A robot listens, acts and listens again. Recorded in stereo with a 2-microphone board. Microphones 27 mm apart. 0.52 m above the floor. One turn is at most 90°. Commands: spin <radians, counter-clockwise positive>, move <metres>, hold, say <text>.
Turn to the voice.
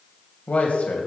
spin 1.13
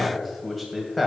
say Found it: a man speaking, straight ahead, 2 to 4 m away.